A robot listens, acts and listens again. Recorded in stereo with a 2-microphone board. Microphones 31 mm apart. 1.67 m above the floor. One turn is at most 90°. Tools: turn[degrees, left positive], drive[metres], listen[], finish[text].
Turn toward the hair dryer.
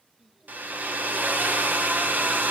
Action: turn[-90]
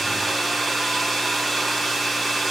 Action: finish[Found it: a hair dryer, straight ahead.]